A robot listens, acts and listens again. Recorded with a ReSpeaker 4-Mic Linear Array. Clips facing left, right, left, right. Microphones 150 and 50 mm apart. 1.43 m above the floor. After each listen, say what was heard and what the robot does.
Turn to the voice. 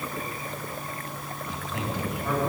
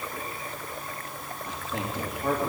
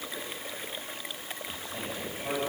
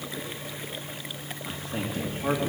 The man speaking: about 75° right or 105° right. Turn 75° right.
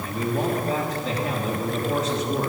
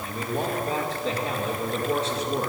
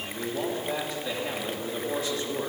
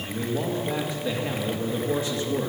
So it is at 30° right. Turn 30° right.
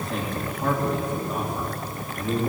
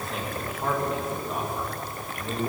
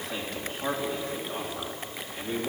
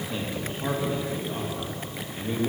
Facing the man speaking, 2 to 4 m away.